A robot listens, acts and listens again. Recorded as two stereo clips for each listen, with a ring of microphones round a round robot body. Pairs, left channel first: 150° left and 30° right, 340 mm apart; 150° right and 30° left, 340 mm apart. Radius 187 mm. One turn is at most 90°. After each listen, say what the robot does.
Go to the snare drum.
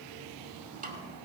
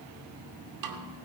Turn 35° left.
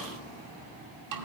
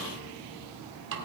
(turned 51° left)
Turn 15° right.
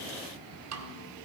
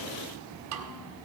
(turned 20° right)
Drive 1.0 m forward.
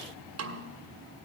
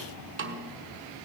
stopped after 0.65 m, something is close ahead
I am next to the snare drum.